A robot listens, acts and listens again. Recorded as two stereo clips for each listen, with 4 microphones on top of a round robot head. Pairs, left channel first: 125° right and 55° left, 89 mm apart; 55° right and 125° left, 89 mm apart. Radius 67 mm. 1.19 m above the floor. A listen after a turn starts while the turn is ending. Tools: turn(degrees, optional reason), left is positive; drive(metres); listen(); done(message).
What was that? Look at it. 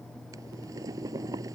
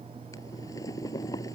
done("Found it: boiling, straight ahead.")